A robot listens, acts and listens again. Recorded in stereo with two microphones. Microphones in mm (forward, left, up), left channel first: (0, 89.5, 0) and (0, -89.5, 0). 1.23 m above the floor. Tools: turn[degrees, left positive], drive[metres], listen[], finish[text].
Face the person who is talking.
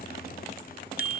Action: listen[]
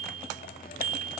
Action: listen[]
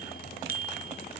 Action: finish[I can't make out anyone speaking to turn to.]